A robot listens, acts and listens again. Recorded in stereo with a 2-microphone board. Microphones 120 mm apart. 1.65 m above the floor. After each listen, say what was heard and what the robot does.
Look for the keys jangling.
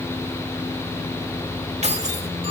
The keys jangling: about 60° right or 120° right. Turn 60° right.
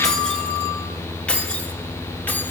So it is at 10° left. Turn 10° left.
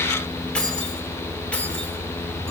The keys jangling is now 10° left. Turn 10° left.
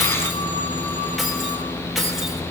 Facing the keys jangling, 2 to 4 m away.